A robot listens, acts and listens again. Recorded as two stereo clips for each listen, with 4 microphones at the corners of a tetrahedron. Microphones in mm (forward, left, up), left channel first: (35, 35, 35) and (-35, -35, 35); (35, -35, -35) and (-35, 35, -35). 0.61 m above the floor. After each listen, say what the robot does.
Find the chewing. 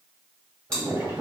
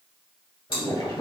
Turn 35° right.
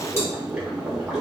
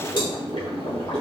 Keep listening.
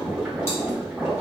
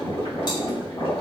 Keep listening.
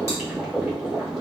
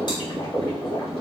Facing where the chewing came from. I can't hear it now.